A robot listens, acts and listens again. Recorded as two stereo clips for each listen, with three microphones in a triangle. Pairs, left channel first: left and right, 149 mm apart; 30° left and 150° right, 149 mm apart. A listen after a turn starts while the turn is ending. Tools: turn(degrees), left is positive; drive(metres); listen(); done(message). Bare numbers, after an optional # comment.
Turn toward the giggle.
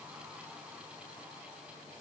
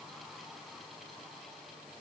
listen()
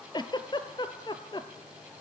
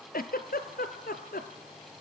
# The giggle: 30° left.
turn(30)
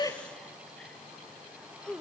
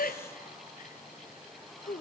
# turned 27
done("Facing the giggle.")